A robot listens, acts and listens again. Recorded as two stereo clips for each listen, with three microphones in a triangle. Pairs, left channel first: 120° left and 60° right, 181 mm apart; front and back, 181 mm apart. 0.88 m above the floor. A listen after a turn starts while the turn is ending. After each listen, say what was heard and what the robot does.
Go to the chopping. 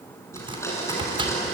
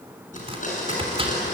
The chopping: 120° right. Turn 120° right.
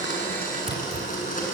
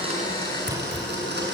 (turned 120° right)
Keep listening.
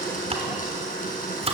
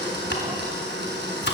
Drive 1.0 m forward.
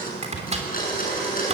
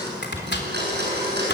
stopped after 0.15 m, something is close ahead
The chopping is now 10° right. Turn 10° right.
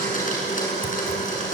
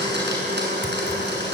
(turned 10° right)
Keep listening.
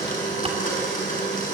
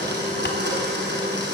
Keep listening.
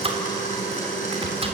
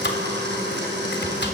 Blocked. The chopping is further on, straight ahead.